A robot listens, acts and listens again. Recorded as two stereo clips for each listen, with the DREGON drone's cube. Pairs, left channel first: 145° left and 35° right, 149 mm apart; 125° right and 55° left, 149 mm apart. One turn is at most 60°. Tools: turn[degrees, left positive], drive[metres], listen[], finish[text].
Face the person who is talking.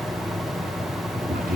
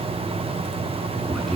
Thought: The man speaking: 35° right.
Action: turn[-35]
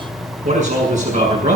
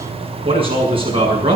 Action: finish[Facing the man speaking.]